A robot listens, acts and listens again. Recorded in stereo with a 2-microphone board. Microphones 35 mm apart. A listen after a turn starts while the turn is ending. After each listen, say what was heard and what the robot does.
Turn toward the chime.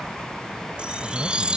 The chime: about 25° right or 155° right. Turn 25° right.
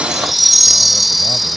Facing the chime.